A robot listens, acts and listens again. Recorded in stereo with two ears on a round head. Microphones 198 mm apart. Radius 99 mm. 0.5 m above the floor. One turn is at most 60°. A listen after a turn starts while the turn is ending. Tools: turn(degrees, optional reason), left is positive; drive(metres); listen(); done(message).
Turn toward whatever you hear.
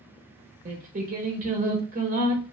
turn(degrees=-35, reason="The singing: about 35° right or 145° right.")
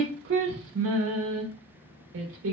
turn(degrees=-60, reason="So it is at 100° right.")
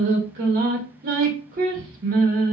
turn(degrees=-45, reason="The singing is now 45° right.")
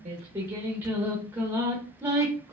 turn(degrees=-10, reason="The singing is now 10° right.")
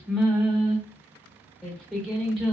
done("Found it: singing, straight ahead.")